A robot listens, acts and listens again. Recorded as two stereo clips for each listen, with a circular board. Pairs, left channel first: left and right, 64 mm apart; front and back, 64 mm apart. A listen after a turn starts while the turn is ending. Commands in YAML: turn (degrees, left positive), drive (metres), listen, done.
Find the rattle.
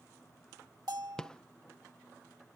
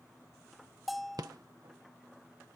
turn: 165
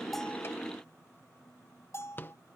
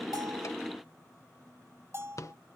turn: 35
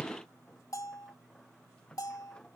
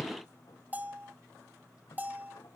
turn: 15
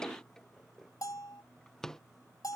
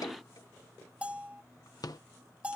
turn: 10
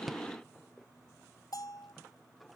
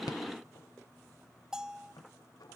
listen: true
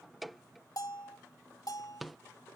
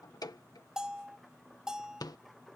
done: "Found it: a rattle, straight ahead."